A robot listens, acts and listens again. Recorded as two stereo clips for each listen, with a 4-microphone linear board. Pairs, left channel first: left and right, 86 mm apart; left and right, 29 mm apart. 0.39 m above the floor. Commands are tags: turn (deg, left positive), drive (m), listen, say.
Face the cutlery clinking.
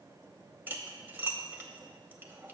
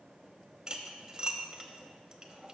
<turn deg="-25"/>
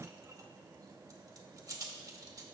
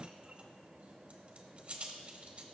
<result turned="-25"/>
<turn deg="-125"/>
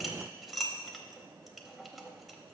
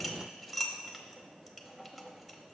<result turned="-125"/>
<say>Found it: cutlery clinking, straight ahead, under 1 m away.</say>